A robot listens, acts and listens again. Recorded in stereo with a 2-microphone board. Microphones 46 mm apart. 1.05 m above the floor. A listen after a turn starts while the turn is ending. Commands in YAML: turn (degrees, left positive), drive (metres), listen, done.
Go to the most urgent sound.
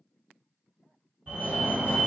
turn: -45
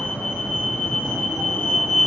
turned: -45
turn: -80
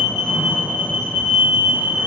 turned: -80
turn: -30
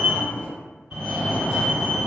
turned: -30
turn: -15
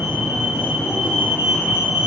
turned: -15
drive: 1.0
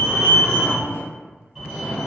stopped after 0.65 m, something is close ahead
done: "Arrived at the fire alarm, straight ahead."